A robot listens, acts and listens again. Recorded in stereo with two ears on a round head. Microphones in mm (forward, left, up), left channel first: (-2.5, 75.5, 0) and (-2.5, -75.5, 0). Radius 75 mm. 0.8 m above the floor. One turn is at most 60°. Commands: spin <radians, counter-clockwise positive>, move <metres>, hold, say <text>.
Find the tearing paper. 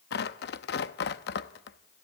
spin 1.05
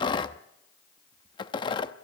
spin 0.52
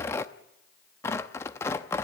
spin 0.26
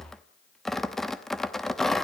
say Facing the tearing paper, under 1 m away.